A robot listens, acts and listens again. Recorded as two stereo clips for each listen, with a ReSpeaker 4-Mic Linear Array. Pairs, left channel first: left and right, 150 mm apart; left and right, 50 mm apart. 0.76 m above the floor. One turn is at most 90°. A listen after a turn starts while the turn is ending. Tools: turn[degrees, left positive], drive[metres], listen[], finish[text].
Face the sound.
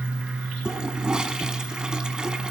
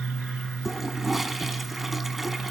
Action: turn[-30]
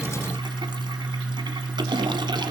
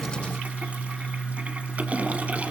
Thought: So it is at 145° right.
Action: turn[-90]
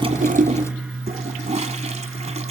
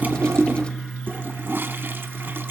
Thought: The toilet flushing is now 55° right.
Action: turn[-55]
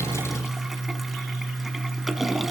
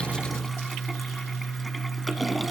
Action: finish[Found it: a toilet flushing, straight ahead, 1 to 2 m away.]